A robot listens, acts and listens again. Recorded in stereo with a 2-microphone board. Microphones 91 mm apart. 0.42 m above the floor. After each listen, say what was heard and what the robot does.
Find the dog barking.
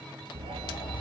Turn 90° right.
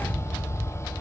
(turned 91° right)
So it is at 15° left. Turn 15° left.
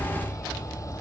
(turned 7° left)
The dog barking is now 15° left. Turn 15° left.
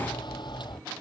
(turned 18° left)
Facing the dog barking.